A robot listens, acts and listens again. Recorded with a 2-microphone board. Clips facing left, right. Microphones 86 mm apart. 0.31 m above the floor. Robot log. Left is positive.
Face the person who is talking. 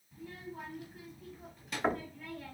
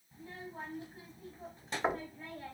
note: The child speaking: about 35° right or 145° right.
cmd yaw -35
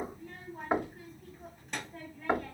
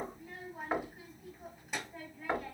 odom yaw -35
note: So it is at 10° right.
cmd yaw -10
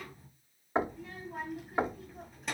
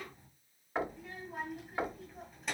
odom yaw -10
end: Found it: a child speaking, straight ahead.